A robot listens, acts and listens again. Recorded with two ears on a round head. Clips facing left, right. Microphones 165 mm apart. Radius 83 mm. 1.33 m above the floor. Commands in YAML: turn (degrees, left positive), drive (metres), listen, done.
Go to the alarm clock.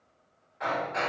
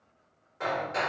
listen: true
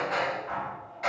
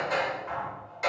listen: true
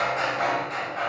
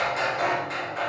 done: "I can't make out an alarm clock to turn to."